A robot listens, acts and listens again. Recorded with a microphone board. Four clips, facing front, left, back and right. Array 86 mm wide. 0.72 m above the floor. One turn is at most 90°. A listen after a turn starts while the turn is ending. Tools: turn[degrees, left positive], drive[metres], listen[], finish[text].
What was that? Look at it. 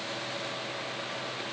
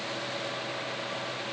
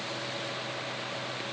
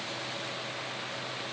Action: listen[]
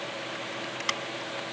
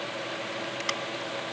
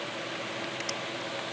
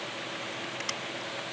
Thought: The scissors: 25° left.
Action: turn[25]
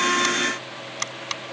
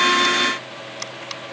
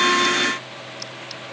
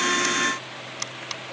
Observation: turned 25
Action: finish[Found it: scissors, straight ahead.]